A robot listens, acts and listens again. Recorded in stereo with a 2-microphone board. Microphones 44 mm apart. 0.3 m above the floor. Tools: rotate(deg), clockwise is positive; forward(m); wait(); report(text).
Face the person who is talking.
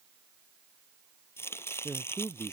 rotate(25)
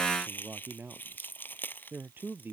rotate(130)
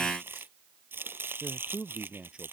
rotate(20)
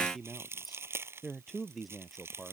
report("Found it: a man speaking, straight ahead.")